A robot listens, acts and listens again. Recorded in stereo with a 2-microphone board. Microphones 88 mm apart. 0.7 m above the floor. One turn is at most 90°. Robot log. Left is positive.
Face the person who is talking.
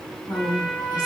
note: The woman speaking: about 55° left or 125° left.
cmd yaw +55
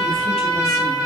cmd idle
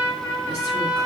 cmd idle
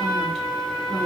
end: I heard a woman speaking, but can't make it out now. It was about straight ahead or 70° left.